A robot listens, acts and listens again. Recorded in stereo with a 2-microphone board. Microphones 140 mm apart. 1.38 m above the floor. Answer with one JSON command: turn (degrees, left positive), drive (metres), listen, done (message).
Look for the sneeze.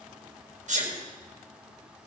{"turn": -55}
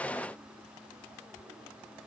{"listen": true}
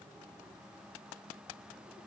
{"done": "I heard a sneeze, but can't make it out now. It was about straight ahead or 70° right."}